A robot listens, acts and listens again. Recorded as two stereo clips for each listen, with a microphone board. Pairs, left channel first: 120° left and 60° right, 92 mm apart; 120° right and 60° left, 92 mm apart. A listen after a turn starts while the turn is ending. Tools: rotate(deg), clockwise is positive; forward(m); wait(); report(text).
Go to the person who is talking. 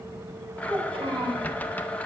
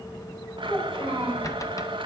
rotate(75)
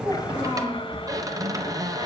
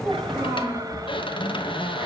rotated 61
rotate(10)
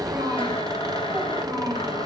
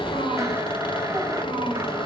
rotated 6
forward(1.0)
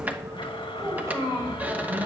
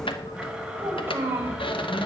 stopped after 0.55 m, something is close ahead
report("Blocked. The child speaking is further on, straight ahead.")